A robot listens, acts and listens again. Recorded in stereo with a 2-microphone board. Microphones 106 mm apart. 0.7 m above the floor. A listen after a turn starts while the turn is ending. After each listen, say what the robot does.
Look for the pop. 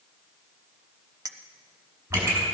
Turn 20° right.
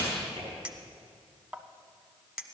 Turn 135° right.
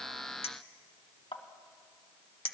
Facing where the pop came from. I can't hear it now.